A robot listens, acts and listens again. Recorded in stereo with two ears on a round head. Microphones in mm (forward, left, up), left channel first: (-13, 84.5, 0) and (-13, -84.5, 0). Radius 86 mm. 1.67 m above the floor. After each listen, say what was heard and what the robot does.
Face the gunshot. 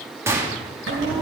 Turn 30° right.
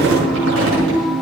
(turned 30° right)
Keep listening.
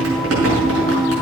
I heard a gunshot, but can't make it out now. It was about 15° left or 135° right.